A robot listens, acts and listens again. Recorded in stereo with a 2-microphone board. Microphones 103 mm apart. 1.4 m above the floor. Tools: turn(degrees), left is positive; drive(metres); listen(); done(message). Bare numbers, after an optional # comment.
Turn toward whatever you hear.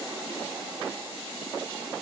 listen()
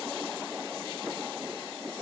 listen()
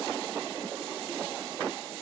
done("I can't make out anything to turn to.")